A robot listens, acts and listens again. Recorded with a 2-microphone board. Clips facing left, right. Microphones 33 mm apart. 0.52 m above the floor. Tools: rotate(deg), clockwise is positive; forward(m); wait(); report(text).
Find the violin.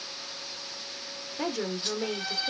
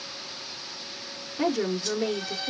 rotate(-50)
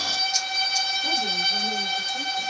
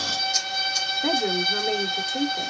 rotate(-80)
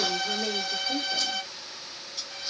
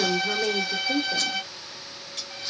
rotate(10)
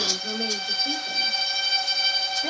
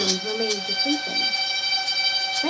report("Facing the violin, 2 to 4 m away.")